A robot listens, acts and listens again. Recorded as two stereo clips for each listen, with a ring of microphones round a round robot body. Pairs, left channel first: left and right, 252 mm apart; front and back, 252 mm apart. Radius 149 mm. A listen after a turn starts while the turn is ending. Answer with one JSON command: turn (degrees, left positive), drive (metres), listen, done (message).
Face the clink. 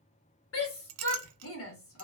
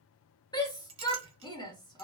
{"turn": -110}
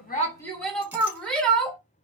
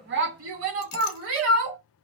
{"listen": true}
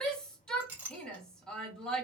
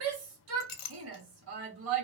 {"done": "Found it: a clink, straight ahead, under 1 m away."}